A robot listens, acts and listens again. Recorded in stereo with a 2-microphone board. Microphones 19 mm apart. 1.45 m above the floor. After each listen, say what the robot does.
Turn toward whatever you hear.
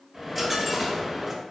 Turn 30° left.
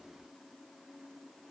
Keep listening.
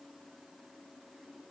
I heard a dropped coin, but can't make it out now. It was about 25° right or 145° left.